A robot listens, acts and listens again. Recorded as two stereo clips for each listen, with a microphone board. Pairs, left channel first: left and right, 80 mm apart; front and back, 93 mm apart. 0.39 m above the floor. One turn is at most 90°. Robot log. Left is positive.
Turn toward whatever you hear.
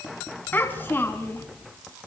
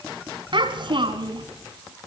note: The child speaking: 155° left.
cmd yaw +90
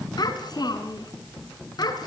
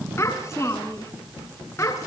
note: The child speaking is now 60° left.
cmd yaw +60
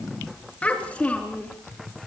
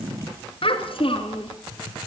note: The child speaking is now 15° left.
cmd yaw +15
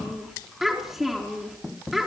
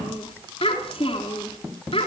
end: Facing the child speaking, over 4 m away.